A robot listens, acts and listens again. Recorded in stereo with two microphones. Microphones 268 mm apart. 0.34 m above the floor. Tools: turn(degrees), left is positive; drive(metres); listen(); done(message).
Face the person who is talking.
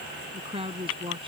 turn(degrees=-20)
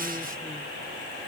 listen()
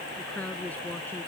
done("Facing the woman speaking.")